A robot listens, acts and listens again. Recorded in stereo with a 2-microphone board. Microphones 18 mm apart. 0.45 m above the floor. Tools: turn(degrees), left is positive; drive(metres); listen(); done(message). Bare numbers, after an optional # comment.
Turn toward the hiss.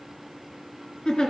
listen()
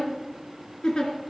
listen()
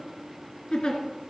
done("I can't make out a hiss, only a giggle.")